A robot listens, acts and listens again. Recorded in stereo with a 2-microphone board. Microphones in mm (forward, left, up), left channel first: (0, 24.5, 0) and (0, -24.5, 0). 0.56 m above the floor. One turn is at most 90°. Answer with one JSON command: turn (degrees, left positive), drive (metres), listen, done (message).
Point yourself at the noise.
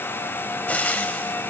{"turn": 35}
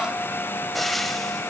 {"done": "Facing the frying, 1 to 2 m away."}